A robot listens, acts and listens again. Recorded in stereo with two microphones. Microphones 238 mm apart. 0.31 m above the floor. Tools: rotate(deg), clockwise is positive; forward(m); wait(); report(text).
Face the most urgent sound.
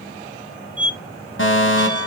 rotate(-55)
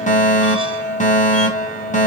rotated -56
rotate(-40)
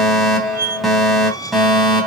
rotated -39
report("Found it: a fire alarm, straight ahead.")